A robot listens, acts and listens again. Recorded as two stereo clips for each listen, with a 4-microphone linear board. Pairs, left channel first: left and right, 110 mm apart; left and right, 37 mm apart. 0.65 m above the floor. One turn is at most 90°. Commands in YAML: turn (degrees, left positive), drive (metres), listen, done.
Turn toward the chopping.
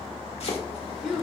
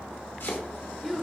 turn: 70
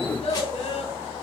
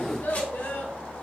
listen: true
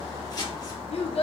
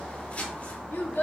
turn: 40
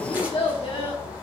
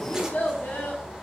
listen: true
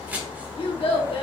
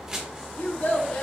turn: -15
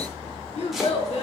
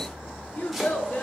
listen: true
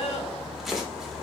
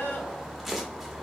done: "Facing the chopping."